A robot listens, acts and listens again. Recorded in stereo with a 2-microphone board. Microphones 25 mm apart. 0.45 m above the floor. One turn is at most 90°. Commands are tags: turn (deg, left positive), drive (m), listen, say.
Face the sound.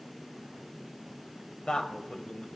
<turn deg="55"/>
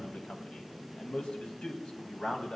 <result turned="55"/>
<turn deg="50"/>
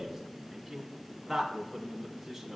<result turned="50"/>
<turn deg="-10"/>
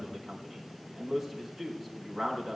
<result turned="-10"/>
<say>Facing the man speaking.</say>